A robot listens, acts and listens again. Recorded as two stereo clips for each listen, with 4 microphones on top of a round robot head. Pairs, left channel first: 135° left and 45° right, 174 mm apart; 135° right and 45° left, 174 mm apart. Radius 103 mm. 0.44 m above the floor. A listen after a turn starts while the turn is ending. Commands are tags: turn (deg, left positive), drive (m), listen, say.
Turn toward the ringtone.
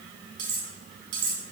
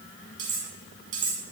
<listen/>
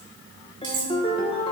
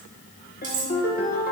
<turn deg="-170"/>
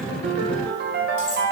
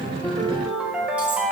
<turn deg="-40"/>
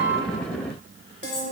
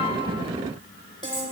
<turn deg="-10"/>
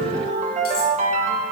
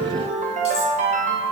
<say>Facing the ringtone, 1 to 2 m away.</say>